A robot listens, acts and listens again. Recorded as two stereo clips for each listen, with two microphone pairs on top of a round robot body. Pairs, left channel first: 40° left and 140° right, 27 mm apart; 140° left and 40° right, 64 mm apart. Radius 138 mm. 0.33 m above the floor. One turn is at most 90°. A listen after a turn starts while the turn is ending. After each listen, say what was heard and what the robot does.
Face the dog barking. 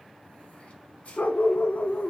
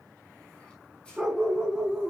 The dog barking: 50° left. Turn 50° left.
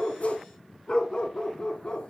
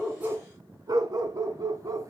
The dog barking is now 10° right. Turn 10° right.
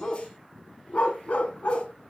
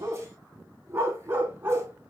The dog barking is now 20° left. Turn 20° left.
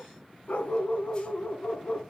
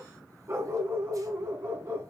The dog barking is now 15° left. Turn 15° left.
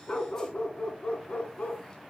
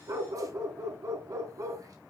Facing the dog barking.